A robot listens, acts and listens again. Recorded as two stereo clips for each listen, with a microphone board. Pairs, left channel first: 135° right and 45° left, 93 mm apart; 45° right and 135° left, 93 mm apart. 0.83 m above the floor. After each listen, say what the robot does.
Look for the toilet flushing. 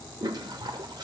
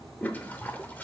Turn 25° left.
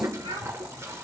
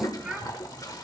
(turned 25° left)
Found it: a toilet flushing, straight ahead.